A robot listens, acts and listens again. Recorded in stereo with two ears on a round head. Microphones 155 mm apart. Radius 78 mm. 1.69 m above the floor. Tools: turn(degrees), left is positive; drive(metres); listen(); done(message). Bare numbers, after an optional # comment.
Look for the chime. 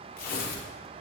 listen()
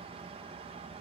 listen()
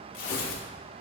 done("I can't make out a chime, only tearing paper.")